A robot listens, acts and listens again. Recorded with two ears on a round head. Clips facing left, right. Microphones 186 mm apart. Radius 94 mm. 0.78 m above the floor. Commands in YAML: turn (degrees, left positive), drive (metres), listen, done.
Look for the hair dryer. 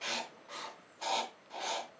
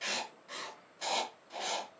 listen: true
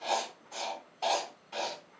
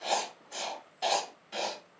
listen: true
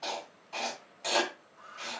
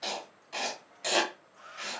turn: -90
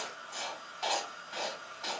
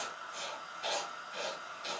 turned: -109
turn: 25
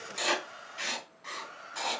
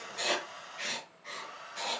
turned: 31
done: "Found it: a hair dryer, straight ahead."